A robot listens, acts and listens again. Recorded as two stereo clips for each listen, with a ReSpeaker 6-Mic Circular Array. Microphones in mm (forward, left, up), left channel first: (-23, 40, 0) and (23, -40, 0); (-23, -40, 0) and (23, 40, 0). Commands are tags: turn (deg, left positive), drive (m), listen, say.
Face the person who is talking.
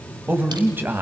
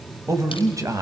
<turn deg="10"/>
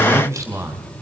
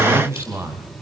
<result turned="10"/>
<say>Facing the man speaking, 2 to 4 m away.</say>